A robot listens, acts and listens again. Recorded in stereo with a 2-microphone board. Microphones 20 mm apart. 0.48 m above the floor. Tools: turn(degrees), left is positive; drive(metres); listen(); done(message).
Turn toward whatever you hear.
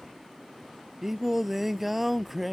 turn(degrees=-30)
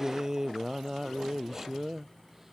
turn(degrees=-20)
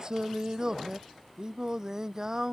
turn(degrees=-145)
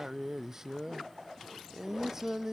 turn(degrees=-15)
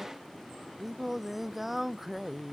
done("Facing the singing.")